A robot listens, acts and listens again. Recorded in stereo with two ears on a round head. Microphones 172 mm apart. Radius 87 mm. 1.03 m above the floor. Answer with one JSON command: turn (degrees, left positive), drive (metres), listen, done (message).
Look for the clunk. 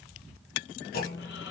{"turn": 50}
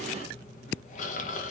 {"listen": true}
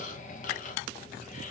{"done": "I heard a clunk, but can't make it out now. It was about straight ahead or 80° left."}